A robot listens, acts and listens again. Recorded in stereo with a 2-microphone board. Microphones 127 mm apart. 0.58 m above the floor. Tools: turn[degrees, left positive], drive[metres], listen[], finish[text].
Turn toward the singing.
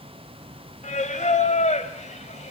Thought: The singing: about 70° left or 110° left.
Action: turn[70]
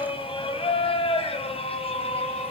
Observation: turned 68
Thought: So it is at 55° left.
Action: turn[55]
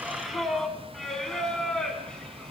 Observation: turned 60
Action: finish[Facing the singing.]